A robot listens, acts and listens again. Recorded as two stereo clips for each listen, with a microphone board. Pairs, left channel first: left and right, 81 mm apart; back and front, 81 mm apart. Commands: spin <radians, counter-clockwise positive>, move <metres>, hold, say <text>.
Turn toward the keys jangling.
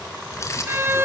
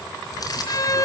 spin 2.44
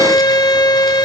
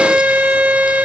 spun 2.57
hold
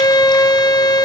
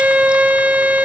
hold
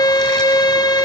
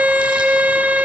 say Facing where the keys jangling came from. I can't hear it now.